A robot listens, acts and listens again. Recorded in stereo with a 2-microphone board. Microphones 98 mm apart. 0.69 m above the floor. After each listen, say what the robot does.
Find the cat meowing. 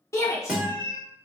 Turn 50° right.
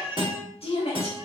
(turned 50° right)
Turn 15° right.
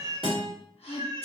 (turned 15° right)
Turn 55° right.
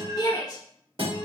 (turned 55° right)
Keep listening.
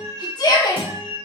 Turn 45° right.
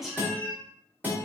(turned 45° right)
Facing the cat meowing.